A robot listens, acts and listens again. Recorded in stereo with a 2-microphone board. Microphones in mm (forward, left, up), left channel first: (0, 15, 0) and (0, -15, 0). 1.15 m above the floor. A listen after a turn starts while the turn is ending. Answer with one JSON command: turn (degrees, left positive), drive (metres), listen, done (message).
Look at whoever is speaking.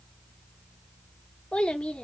{"turn": 35}
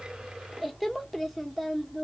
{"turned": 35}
{"done": "Found it: a child speaking, straight ahead, under 1 m away."}